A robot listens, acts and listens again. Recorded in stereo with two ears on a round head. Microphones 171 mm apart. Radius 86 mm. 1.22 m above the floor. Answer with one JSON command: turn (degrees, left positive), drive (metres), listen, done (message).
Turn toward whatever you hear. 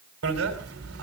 {"turn": -90}
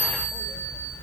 {"done": "Found it: a bicycle bell, straight ahead."}